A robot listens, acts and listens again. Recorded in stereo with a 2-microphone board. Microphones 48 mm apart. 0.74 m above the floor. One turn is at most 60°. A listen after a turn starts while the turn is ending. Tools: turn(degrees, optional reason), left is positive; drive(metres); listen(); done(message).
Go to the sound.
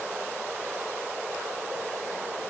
listen()
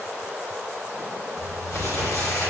turn(degrees=60, reason="The crumpling: about 70° left or 110° left.")
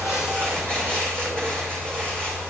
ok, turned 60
turn(degrees=15, reason="So it is at 15° left.")
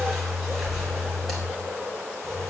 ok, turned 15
drive(metres=1.0)
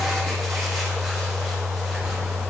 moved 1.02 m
drive(metres=1.0)
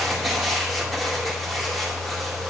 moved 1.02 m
drive(metres=1.0)
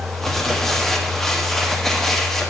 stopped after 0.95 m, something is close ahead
done("I am next to the crumpling.")